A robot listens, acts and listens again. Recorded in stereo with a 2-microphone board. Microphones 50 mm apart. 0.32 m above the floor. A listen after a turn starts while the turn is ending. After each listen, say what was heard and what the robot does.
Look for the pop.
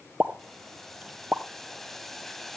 The pop: about 25° right or 155° right. Turn 25° right.
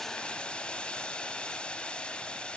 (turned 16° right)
Keep listening.
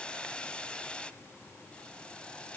I heard a pop, but can't make it out now. It was about 10° right or 135° right.